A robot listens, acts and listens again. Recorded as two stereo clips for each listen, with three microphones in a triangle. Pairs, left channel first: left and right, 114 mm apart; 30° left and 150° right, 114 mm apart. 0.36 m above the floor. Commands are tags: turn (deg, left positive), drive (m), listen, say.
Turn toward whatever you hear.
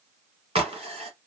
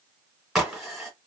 <turn deg="-65"/>
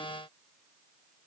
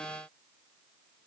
<say>Facing where the crack came from. I can't hear it now.</say>